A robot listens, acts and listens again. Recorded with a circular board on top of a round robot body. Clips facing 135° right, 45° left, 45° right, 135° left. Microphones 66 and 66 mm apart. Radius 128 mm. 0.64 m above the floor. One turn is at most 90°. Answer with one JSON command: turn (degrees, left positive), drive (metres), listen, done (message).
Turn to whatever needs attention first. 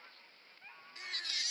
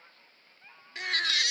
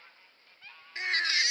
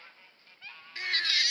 {"turn": 20}
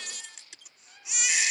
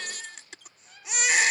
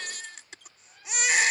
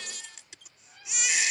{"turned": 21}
{"done": "Facing the baby crying."}